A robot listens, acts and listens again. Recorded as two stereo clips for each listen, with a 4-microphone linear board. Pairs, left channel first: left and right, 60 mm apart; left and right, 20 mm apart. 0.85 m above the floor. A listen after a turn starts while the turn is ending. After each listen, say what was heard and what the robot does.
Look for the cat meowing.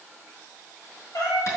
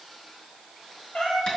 Turn 90° left.
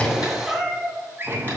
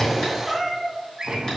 Facing the cat meowing, 2 to 4 m away.